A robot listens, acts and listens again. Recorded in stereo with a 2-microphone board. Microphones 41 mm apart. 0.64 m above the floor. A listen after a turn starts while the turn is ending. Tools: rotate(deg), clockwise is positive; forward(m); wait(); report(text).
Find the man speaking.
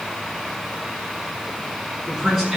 rotate(30)
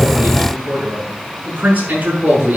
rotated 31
rotate(140)
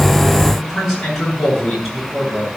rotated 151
report("Found it: a man speaking, straight ahead, over 4 m away.")